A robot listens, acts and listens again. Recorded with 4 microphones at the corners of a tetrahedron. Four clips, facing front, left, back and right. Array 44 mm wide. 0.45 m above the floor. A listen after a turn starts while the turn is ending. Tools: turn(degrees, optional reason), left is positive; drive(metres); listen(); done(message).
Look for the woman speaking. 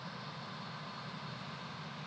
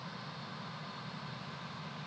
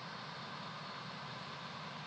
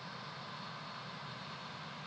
listen()
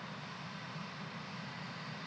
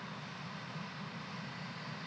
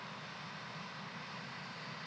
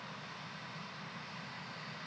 listen()
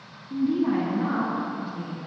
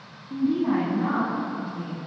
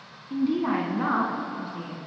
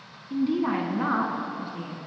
turn(degrees=-125, reason="The woman speaking: 125° right.")
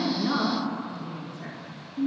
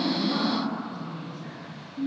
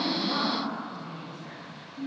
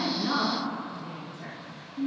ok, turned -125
turn(degrees=-30, reason="The woman speaking is now 30° right.")
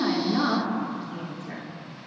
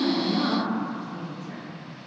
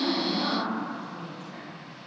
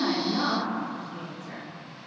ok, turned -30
done("Found it: a woman speaking, straight ahead.")